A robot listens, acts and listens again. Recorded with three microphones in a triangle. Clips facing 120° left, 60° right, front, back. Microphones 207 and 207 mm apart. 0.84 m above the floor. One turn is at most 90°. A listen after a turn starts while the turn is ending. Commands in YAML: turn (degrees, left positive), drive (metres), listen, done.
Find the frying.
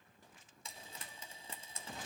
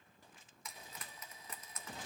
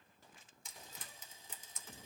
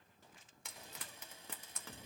turn: 90
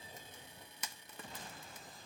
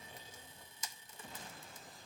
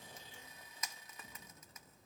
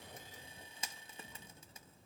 turn: 90
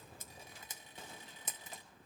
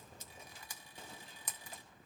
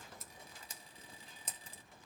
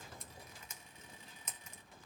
turn: 50
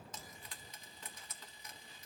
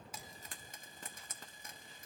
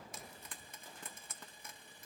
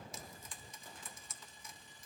turn: -20
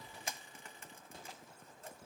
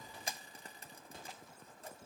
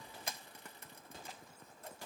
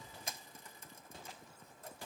turn: -10
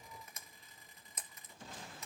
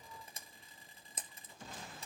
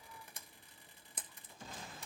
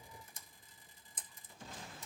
done: "Found it: frying, straight ahead, 1 to 2 m away."